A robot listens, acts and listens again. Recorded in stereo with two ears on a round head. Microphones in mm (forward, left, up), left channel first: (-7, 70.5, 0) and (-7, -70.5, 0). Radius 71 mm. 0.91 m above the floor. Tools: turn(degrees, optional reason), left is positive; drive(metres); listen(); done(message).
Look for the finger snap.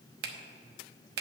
turn(degrees=-70, reason="The finger snap: about 70° right or 110° right.")
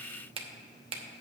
turn(degrees=-35, reason="So it is at 35° right.")
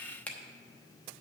turn(degrees=10, reason="The finger snap is now 10° left.")
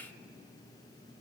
listen()
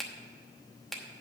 done("Found it: a finger snap, straight ahead.")